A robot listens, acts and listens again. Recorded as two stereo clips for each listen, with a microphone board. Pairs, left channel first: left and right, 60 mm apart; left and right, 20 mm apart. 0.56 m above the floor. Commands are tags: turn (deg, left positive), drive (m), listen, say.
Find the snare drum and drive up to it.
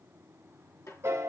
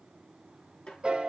<turn deg="55"/>
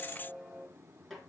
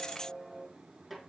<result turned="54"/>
<drive m="1.0"/>
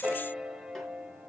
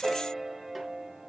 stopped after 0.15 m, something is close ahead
<listen/>
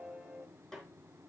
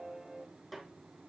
<say>Something is in my way. I am facing the snare drum but have not reached it.</say>